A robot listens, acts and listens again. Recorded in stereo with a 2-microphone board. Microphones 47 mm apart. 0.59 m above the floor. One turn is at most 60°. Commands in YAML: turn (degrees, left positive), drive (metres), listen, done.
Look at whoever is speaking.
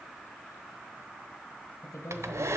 turn: 60
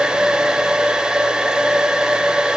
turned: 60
listen: true
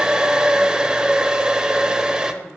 listen: true
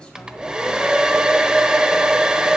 done: "I heard a woman speaking, but can't make it out now. It was about 15° left or 45° left."